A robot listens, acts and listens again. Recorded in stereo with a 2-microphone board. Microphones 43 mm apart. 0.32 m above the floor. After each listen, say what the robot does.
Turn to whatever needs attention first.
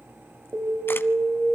Turn 45° right.
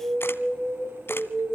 Turn 10° right.
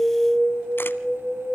Facing the alarm, 2 to 4 m away.